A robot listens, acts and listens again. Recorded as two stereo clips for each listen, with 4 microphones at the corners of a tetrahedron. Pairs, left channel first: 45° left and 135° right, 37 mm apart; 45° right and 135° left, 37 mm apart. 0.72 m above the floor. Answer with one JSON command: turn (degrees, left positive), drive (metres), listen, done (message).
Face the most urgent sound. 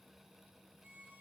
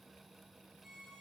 {"listen": true}
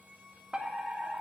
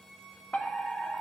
{"turn": -75}
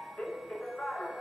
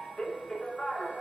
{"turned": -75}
{"turn": 10}
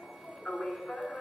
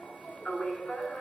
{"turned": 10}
{"done": "Found it: a fire alarm, straight ahead."}